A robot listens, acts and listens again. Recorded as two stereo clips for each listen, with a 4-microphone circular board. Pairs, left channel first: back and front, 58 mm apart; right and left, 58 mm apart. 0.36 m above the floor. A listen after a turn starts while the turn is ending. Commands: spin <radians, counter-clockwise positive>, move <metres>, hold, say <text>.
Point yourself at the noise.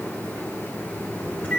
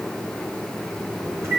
spin 2.01
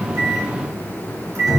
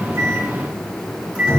spin 0.35
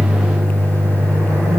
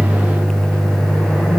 say Facing the microwave.